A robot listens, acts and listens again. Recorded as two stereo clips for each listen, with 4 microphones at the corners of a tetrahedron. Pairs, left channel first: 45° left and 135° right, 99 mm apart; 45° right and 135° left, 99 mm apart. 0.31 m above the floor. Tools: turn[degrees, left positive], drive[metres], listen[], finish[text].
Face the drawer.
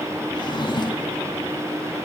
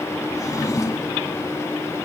Thought: The drawer: 10° left.
Action: turn[10]
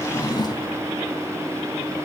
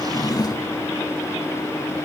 Action: finish[Facing the drawer, 1 to 2 m away.]